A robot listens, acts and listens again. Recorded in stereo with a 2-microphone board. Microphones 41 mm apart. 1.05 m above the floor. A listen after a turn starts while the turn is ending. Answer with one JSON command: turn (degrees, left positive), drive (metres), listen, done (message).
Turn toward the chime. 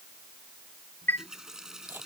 {"turn": 65}
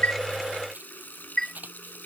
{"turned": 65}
{"turn": 15}
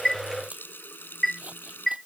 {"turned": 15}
{"done": "Found it: a chime, straight ahead."}